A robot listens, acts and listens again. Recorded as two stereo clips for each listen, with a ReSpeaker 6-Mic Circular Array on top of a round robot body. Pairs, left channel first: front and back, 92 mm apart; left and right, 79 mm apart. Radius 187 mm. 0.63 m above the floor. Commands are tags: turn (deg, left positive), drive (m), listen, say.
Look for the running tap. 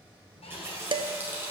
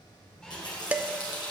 <turn deg="115"/>
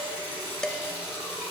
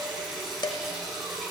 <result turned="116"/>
<say>Found it: a running tap, straight ahead.</say>